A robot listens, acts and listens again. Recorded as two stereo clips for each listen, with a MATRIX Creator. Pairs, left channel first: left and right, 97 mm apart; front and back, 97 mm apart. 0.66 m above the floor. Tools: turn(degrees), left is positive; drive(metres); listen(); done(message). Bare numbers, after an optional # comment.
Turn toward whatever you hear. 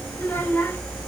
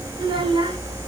# The child speaking: 160° left.
turn(160)
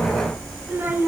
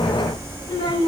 # The child speaking is now 20° right.
turn(-20)
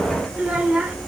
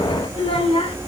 # The child speaking is now 10° right.
turn(-10)
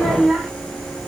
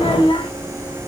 done("Facing the child speaking.")